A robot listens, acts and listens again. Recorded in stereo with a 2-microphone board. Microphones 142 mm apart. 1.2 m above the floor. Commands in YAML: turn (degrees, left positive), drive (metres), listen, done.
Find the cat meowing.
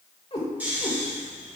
turn: 45
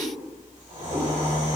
listen: true
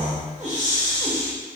listen: true
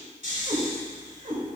turn: -50
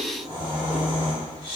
listen: true
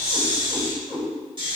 turn: -35
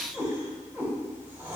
turn: -15
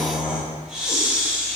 listen: true
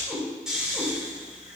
listen: true
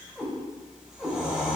done: "Facing the cat meowing, 2 to 4 m away."